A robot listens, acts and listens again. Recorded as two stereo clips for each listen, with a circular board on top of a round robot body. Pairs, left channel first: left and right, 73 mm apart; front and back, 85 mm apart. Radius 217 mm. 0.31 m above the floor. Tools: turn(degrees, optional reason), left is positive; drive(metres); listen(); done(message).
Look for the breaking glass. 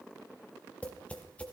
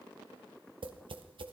listen()
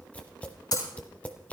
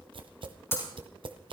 turn(degrees=60, reason="The breaking glass: 60° left.")
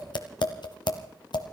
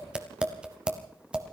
done("I heard breaking glass from this way, but can't make it out now.")